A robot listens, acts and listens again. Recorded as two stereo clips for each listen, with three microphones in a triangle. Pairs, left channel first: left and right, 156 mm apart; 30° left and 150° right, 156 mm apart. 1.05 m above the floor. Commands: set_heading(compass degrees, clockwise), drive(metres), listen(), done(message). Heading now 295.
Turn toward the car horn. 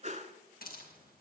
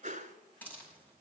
listen()
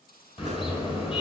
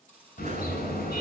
set_heading(260)
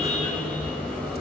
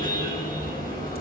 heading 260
done("Facing the car horn.")